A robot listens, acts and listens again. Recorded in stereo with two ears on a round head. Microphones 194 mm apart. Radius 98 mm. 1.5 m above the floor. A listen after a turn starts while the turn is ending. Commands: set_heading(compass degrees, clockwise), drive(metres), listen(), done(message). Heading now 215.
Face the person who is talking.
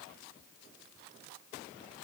listen()
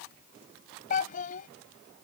set_heading(175)
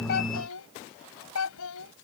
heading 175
set_heading(75)
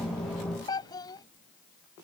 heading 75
set_heading(55)
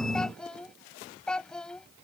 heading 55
done("Found it: a child speaking, straight ahead.")